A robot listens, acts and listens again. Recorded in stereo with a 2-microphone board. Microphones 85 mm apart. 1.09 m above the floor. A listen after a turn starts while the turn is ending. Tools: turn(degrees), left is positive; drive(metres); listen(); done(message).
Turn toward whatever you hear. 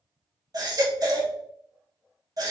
turn(degrees=-45)
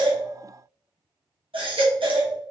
turn(degrees=-85)
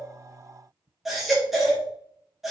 done("Facing the baby crying, 1 to 2 m away.")